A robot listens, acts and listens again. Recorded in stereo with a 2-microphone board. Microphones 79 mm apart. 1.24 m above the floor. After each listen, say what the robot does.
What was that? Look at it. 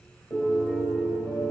Turn 35° left.
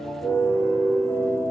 Turn 105° left.
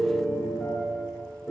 Turn 15° left.
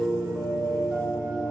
Facing the piano.